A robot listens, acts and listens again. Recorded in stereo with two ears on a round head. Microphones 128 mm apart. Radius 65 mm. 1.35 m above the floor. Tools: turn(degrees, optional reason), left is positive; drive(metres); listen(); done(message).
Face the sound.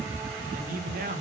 turn(degrees=-60, reason="The man speaking: about 60° right or 120° right.")
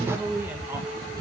turn(degrees=-10, reason="So it is at 10° right.")
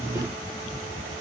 listen()
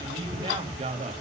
turn(degrees=-45, reason="The man speaking is now 45° right.")
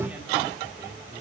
listen()
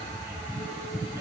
listen()
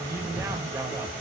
turn(degrees=-20, reason="The man speaking is now 20° right.")
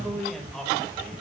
done("Found it: a man speaking, straight ahead.")